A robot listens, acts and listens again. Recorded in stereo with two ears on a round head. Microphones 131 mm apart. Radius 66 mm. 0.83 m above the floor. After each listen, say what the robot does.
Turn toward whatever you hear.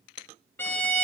Turn 30° left.
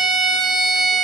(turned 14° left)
Found it: a violin, straight ahead.